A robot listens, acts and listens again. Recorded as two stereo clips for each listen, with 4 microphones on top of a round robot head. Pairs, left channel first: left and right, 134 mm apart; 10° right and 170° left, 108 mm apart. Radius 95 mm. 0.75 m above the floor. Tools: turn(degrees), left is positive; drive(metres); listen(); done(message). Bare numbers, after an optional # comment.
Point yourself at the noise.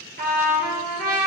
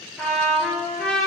# The trumpet: 90° right.
turn(-90)
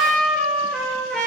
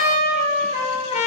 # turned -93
done("Found it: a trumpet, straight ahead.")